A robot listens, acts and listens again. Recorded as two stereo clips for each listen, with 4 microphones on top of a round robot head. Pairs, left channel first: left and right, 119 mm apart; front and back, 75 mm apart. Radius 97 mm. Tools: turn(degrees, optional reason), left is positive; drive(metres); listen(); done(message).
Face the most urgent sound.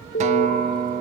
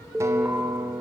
turn(degrees=100, reason="The alarm: 100° left.")
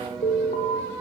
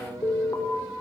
turn(degrees=50, reason="The alarm is now 50° left.")
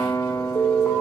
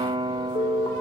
turn(degrees=10, reason="The alarm is now 10° left.")
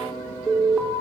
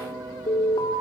done("Found it: an alarm, straight ahead, over 4 m away.")